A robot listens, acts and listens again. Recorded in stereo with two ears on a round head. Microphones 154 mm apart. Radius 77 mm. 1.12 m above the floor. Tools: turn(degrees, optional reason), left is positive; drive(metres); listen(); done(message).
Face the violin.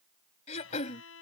turn(degrees=90)
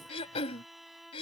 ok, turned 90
done("Found it: a violin, straight ahead.")